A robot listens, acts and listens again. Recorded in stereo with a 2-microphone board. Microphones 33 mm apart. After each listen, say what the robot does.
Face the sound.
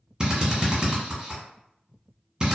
Turn 25° right.
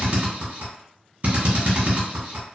Turn 130° right.
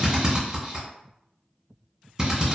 Turn 15° right.
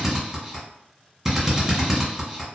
Facing the drill, 1 to 2 m away.